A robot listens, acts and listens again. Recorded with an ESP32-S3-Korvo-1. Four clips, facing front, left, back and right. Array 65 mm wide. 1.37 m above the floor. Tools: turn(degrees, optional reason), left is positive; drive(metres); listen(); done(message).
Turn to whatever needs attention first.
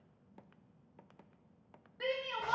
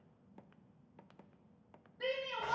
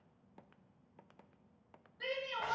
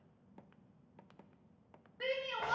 turn(degrees=-45, reason="The shout: 45° right.")
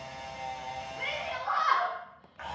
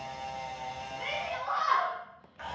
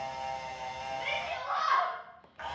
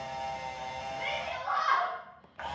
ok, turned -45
turn(degrees=-15, reason="The shout is now 15° right.")
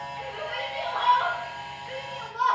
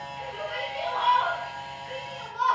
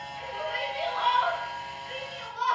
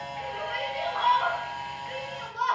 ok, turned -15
done("Facing the shout, 1 to 2 m away.")